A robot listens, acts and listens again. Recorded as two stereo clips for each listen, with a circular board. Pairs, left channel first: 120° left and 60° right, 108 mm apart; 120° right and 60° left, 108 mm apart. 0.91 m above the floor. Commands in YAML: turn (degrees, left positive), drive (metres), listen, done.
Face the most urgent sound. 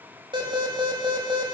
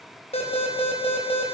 turn: -105
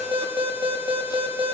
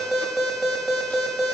turn: -30
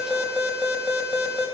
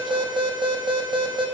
turn: 20
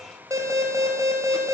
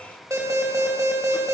done: "Facing the alarm."